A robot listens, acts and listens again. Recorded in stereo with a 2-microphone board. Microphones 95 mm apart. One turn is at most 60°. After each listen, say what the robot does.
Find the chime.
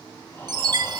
Turn 50° right.
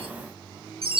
Turn 60° right.
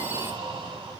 Turn 20° right.
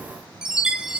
Turn 10° right.
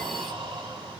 Keep listening.
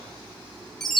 Found it: a chime, straight ahead, 1 to 2 m away.